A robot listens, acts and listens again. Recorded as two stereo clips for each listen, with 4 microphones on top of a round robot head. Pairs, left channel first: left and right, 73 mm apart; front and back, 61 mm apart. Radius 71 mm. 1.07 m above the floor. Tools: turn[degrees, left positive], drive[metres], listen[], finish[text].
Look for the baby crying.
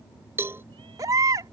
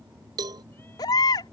Thought: The baby crying: 35° right.
Action: turn[-35]
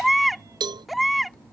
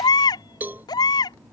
Action: finish[Found it: a baby crying, straight ahead.]